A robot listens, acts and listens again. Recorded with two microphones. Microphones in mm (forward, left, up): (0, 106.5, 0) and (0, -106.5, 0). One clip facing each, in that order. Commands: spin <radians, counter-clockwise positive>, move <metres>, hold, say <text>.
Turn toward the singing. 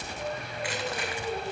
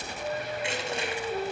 spin 0.96
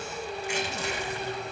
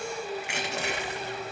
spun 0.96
spin 0.87
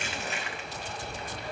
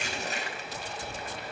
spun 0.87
hold
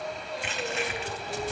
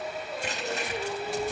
spin -0.52
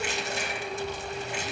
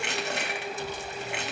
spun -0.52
say Facing the singing.